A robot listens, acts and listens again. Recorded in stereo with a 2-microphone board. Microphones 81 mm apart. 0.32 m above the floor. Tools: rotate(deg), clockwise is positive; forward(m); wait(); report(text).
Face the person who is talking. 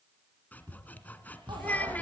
rotate(-20)
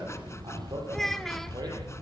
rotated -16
report("Facing the child speaking, 1 to 2 m away.")